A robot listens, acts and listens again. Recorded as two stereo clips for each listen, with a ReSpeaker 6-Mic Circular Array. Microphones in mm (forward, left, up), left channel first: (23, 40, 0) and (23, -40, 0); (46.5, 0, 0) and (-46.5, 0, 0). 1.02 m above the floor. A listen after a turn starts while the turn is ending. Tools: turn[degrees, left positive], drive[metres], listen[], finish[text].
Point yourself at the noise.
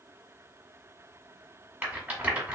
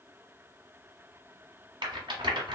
Thought: The rattle: 155° right.
Action: turn[-155]
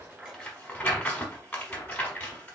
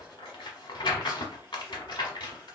Thought: The rattle is now 25° left.
Action: turn[25]
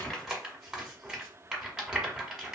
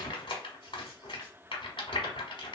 Action: finish[Found it: a rattle, straight ahead.]